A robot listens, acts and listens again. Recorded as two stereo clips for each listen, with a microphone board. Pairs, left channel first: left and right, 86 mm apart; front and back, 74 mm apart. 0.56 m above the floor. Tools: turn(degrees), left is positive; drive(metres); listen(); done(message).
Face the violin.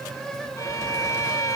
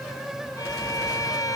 turn(degrees=35)
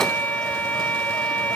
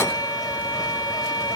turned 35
turn(degrees=20)
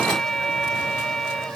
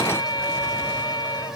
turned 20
done("Found it: a violin, straight ahead, 1 to 2 m away.")